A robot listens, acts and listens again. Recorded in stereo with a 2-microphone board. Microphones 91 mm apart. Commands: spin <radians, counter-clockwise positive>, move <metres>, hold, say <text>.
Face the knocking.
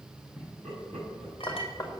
spin 0.79
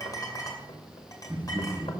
hold
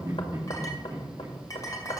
spin 1.57
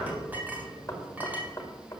spin 0.52
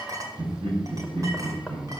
hold
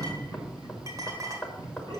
spin 0.17
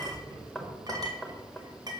say Facing the knocking.